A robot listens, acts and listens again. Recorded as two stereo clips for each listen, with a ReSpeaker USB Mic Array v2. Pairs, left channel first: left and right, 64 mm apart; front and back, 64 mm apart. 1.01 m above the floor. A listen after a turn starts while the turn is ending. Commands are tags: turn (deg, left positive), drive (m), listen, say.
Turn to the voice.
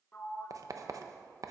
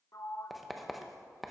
<listen/>
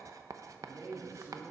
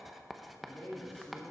<turn deg="-55"/>
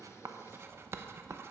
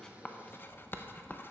<listen/>
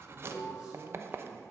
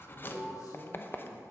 <turn deg="-15"/>
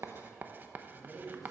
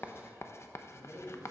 <say>Facing the man speaking.</say>